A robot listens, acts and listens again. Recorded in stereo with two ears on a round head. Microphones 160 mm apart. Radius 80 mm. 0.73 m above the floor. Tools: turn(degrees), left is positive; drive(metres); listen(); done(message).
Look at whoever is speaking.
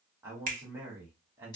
turn(degrees=-30)
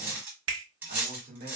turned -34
turn(degrees=-135)
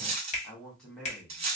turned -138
done("Found it: a man speaking, straight ahead, 1 to 2 m away.")